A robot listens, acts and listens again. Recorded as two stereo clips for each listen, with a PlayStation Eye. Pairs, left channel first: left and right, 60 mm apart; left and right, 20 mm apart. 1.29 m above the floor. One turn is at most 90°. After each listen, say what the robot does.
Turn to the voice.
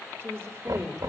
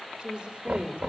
Turn 40° right.
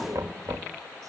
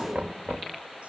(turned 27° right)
Keep listening.
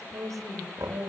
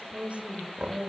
Turn 90° right.
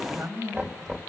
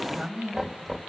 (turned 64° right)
Turn 45° right.
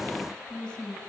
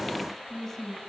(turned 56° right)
Turn 10° left.
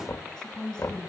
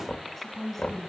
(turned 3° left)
Turn 10° left.
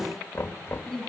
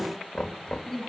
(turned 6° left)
Found it: a woman speaking, straight ahead, over 4 m away.